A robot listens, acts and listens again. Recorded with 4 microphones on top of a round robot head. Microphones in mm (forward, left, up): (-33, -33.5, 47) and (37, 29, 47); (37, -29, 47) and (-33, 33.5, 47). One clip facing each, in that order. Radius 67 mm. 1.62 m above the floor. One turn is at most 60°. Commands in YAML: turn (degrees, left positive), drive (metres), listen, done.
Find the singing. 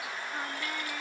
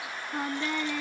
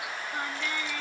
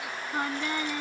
turn: 60
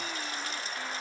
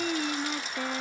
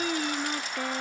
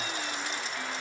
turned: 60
done: "Found it: singing, straight ahead."